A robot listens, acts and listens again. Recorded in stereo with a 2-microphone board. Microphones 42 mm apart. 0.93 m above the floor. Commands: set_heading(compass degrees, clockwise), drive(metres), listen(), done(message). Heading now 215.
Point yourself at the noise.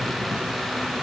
listen()
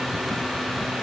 listen()
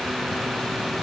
done("I can't make out anything to turn to.")